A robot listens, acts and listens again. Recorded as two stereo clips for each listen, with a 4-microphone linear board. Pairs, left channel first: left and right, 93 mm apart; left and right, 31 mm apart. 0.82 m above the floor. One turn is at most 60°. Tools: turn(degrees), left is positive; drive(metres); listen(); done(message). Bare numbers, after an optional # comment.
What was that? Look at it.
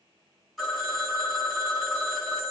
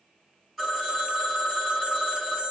turn(30)
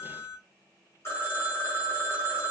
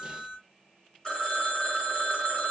# So it is at 150° left.
turn(60)
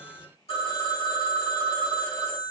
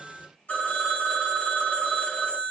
# The phone ringing is now 90° left.
turn(60)
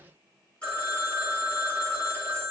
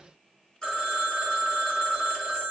# The phone ringing is now 15° left.
turn(15)
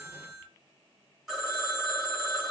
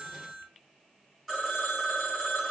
done("Found it: a phone ringing, straight ahead, 2 to 4 m away.")